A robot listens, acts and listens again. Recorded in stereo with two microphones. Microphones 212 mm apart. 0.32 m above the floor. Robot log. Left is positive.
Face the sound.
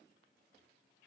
cmd idle
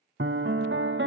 note: The piano: about 65° right or 115° right.
cmd yaw -65
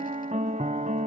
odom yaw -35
note: So it is at 40° right.
cmd yaw -40
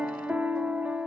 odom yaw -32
end: Facing the piano, under 1 m away.